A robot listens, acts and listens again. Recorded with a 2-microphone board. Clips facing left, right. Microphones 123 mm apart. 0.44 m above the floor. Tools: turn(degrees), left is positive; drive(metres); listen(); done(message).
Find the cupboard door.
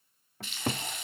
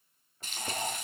turn(degrees=70)
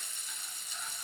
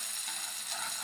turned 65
listen()
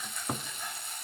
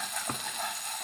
done("Facing the cupboard door.")